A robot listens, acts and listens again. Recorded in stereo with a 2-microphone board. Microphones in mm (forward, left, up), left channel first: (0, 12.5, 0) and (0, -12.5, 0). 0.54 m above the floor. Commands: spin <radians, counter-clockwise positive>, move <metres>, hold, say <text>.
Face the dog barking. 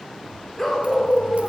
spin 0.52
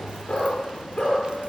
spin 2.53
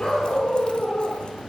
spin 0.96
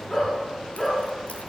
spin 0.17
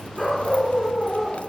say Facing the dog barking.